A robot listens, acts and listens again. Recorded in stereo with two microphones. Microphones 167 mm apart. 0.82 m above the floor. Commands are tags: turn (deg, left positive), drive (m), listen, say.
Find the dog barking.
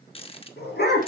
<turn deg="90"/>
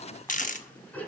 <turn deg="10"/>
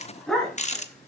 <say>Found it: a dog barking, straight ahead, 2 to 4 m away.</say>